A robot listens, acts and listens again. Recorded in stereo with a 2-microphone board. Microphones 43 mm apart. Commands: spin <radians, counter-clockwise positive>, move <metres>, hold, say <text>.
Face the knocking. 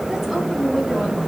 hold
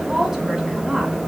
hold
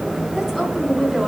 say I can't make out knocking, only a woman speaking.